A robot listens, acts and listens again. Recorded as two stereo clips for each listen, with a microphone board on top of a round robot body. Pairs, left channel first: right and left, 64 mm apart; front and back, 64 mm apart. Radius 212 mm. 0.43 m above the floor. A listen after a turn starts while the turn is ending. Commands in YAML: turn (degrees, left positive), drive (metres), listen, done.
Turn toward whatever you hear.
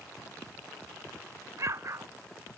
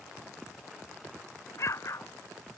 turn: 45
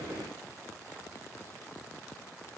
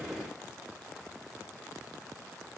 done: "I heard an explosion from this way, but can't make it out now."